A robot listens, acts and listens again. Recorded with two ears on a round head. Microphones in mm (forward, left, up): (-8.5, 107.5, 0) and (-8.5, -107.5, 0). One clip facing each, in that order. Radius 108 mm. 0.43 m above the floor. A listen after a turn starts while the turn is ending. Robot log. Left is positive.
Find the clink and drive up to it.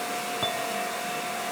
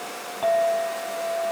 note: The clink: about 20° left or 160° left.
cmd yaw +20
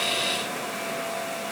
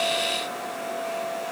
note: So it is at 140° left.
cmd yaw +140
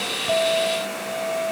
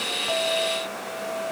note: The clink is now 15° left.
cmd yaw +15
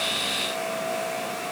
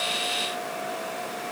cmd idle
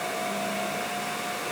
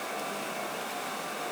cmd idle
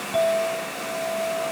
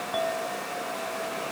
cmd fwd 1.0
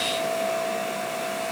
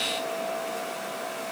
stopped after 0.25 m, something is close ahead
cmd idle
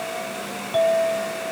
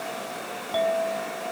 end: Something is in my way. I am facing the clink but have not reached it.